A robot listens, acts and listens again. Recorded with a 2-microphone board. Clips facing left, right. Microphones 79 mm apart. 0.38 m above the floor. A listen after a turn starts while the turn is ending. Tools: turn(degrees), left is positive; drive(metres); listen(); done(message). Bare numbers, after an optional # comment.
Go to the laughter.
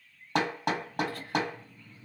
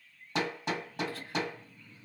# The laughter: about 55° left or 125° left.
turn(55)
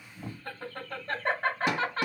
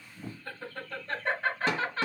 # So it is at 55° left.
turn(55)
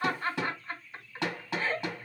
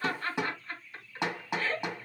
# The laughter is now 20° left.
turn(20)
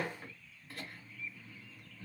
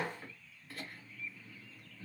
drive(1.0)
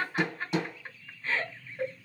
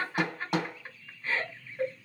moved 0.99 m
drive(1.0)
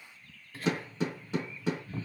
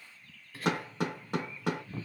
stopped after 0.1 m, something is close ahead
done("Arrived at the laughter, straight ahead.")